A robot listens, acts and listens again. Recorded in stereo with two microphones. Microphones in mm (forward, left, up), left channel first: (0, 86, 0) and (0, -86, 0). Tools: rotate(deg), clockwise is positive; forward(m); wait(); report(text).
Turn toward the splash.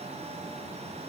wait()
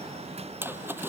rotate(30)
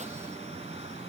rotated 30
wait()
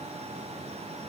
report("I heard a splash, but can't make it out now. It was about 20° left or 140° right.")